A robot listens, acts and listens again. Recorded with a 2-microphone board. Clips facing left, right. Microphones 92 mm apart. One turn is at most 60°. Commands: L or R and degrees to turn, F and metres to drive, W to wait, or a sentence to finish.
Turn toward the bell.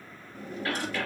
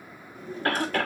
W
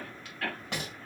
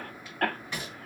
W
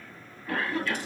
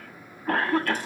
I can't make out a bell to turn to.